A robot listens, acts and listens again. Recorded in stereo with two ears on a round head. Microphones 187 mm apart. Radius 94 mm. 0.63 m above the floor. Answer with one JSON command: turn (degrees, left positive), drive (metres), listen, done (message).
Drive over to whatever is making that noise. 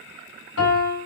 {"turn": 70}
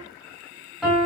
{"drive": 1.0}
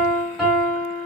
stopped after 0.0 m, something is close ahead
{"done": "Something is in my way. I am facing the piano but have not reached it."}